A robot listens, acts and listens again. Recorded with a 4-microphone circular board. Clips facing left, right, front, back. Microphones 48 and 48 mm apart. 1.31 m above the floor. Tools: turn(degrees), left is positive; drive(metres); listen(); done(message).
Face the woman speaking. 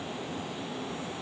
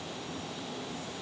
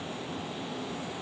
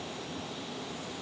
listen()
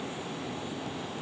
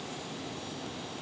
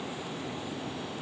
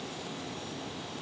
listen()
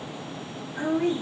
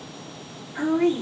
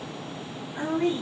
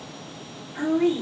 turn(degrees=-100)
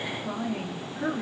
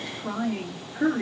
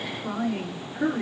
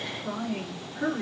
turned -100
turn(degrees=-35)
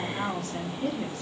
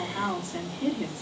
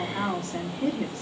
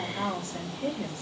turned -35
done("Found it: a woman speaking, straight ahead.")